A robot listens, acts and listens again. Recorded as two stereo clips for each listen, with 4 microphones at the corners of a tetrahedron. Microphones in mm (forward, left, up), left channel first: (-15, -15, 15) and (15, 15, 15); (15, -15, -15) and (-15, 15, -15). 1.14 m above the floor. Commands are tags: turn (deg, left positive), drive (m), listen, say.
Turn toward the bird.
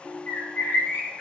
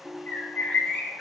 <turn deg="-110"/>
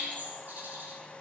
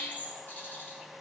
<say>Found it: a bird, straight ahead.</say>